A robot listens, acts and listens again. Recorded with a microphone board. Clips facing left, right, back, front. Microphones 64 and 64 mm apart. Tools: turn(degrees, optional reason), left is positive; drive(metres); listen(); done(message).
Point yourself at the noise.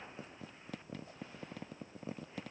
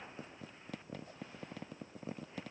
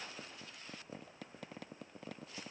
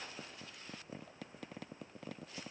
listen()
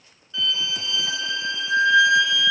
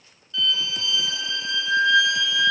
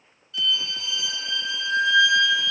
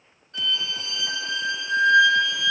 turn(degrees=30, reason="The violin: 30° left.")
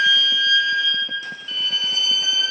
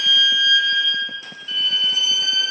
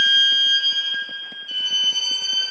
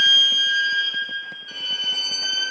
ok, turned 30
done("Found it: a violin, straight ahead.")